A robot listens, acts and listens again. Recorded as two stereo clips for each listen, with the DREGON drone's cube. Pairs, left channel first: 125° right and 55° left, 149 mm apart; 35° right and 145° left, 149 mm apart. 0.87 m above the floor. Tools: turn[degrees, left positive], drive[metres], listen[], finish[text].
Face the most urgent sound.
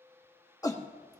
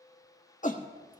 Thought: The shout: 60° right.
Action: turn[-60]
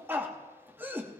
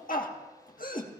Thought: The shout is now 20° right.
Action: turn[-20]
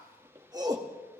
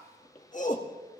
Action: finish[Facing the shout.]